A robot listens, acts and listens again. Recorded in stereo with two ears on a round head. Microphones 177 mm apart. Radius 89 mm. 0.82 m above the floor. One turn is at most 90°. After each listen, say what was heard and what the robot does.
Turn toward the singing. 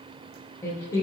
Turn 30° left.
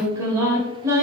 So it is at 15° right. Turn 15° right.
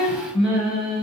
Facing the singing.